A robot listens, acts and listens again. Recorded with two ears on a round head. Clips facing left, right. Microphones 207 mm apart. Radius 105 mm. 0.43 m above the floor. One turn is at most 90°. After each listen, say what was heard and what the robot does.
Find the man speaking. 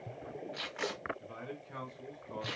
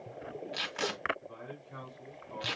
The man speaking: about 60° left or 120° left. Turn 60° left.
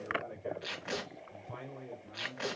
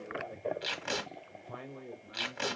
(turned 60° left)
So it is at 10° right. Turn 10° right.
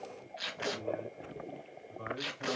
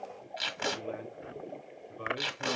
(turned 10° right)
The man speaking is now 35° right. Turn 35° right.
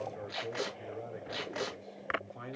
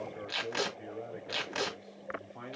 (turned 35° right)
Found it: a man speaking, straight ahead.